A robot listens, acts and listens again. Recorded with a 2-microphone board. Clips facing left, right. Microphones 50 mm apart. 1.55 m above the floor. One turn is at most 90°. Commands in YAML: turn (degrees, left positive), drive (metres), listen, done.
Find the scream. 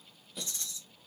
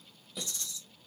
listen: true
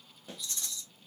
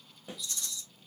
listen: true
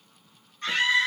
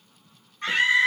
turn: -20
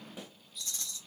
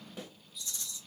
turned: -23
listen: true
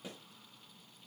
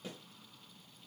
listen: true
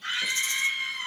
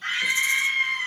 turn: -90
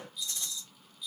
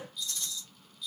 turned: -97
turn: -40
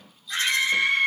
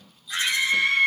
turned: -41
done: "Facing the scream."